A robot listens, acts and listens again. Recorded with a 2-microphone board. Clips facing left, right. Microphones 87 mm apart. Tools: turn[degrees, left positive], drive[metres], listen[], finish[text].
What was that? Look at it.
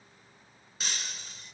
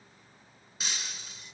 Action: turn[-30]
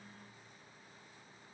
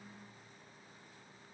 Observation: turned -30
Action: listen[]
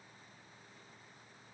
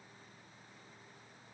Action: finish[I heard breaking glass, but can't make it out now. It was about 25° left or 145° right.]